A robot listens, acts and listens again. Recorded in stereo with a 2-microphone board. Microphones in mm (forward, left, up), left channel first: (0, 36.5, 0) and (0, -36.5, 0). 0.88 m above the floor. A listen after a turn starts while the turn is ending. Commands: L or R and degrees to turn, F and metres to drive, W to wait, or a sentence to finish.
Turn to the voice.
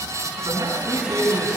R90
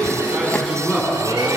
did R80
Facing the man speaking.